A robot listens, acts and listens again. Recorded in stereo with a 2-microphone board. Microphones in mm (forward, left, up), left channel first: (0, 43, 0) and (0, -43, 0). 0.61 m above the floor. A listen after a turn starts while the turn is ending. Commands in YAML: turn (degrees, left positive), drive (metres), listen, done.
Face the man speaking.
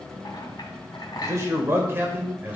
turn: -20
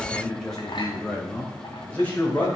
turn: 20
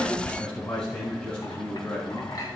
turn: 10
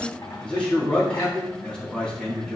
turn: 10
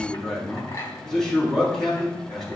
done: "Facing the man speaking, over 4 m away."